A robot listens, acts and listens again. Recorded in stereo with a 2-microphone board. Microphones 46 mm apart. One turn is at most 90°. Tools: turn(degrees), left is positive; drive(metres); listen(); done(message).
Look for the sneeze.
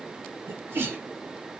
turn(degrees=-65)
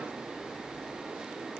listen()
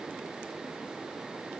done("I heard a sneeze, but can't make it out now. It was about straight ahead or 50° right.")